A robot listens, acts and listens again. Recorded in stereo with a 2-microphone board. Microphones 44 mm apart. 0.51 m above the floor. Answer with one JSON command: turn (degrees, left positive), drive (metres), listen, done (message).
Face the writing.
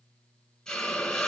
{"listen": true}
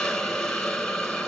{"listen": true}
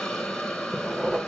{"turn": -30}
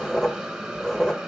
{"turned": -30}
{"turn": 15}
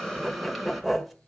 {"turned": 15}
{"done": "Facing the writing, 1 to 2 m away."}